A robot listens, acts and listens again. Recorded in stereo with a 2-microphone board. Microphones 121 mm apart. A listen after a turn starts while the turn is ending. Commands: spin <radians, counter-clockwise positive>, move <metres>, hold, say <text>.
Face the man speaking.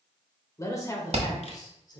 spin 0.61
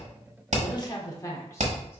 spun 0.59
spin 0.44
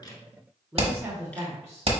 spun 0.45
spin -0.44
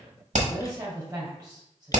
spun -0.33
spin -0.35
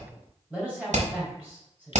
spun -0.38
say Found it: a man speaking, straight ahead, 2 to 4 m away.